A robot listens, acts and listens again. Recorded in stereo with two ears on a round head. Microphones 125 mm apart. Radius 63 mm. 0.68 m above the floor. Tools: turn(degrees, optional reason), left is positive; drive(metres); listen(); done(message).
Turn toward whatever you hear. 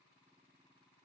listen()
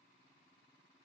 listen()
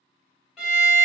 turn(degrees=-30)
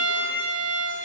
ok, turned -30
turn(degrees=-145, reason="So it is at 145° right.")
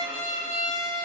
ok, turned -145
turn(degrees=-30, reason="The violin is now 30° right.")
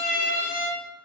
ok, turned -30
done("Found it: a violin, straight ahead, 1 to 2 m away.")